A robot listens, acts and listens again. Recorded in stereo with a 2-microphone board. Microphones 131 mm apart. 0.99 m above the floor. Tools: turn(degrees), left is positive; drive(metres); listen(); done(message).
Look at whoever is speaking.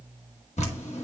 listen()
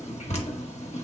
listen()
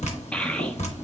turn(degrees=30)
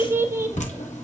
turn(degrees=-20)
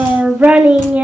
turn(degrees=-10)
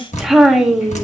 done("Facing the child speaking, under 1 m away.")